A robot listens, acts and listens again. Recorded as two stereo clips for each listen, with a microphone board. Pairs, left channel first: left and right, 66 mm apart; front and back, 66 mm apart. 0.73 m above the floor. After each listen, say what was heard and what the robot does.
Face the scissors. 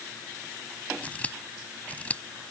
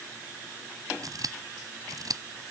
The scissors: 160° left. Turn 160° left.
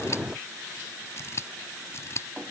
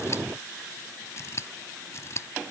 The scissors is now 45° left. Turn 45° left.
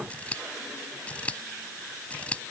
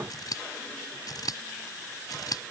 The scissors is now 20° left. Turn 20° left.
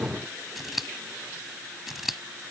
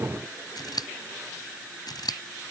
Facing the scissors.